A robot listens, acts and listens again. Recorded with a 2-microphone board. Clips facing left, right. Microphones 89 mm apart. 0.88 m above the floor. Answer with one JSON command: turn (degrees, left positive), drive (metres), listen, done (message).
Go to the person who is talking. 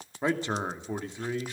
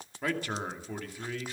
{"turn": 25}
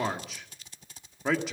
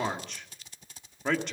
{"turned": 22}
{"drive": 1.0}
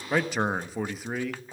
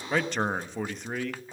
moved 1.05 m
{"drive": 1.0}
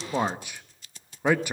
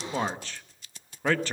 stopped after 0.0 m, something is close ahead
{"turn": 15}
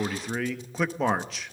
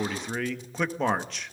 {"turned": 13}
{"done": "Arrived at the man speaking, straight ahead."}